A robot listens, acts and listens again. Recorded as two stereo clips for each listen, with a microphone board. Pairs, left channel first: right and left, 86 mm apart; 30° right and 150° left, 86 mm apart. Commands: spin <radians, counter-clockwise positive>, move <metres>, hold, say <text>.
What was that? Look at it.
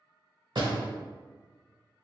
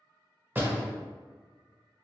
spin 1.48
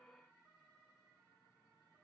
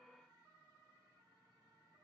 say Facing where the door slam came from. I can't hear it now.